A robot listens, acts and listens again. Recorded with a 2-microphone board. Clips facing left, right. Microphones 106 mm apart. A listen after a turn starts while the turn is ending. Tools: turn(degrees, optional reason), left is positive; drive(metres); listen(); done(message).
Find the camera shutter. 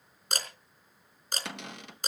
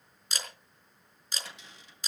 turn(degrees=50, reason="The camera shutter: about 50° left or 130° left.")
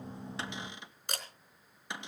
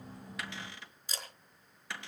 turn(degrees=75, reason="So it is at 75° left.")
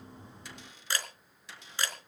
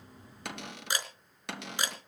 turn(degrees=-15, reason="The camera shutter is now 15° right.")
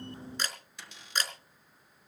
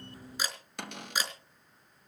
turn(degrees=-10, reason="The camera shutter is now 10° right.")
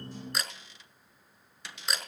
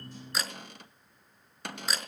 done("Facing the camera shutter, over 4 m away.")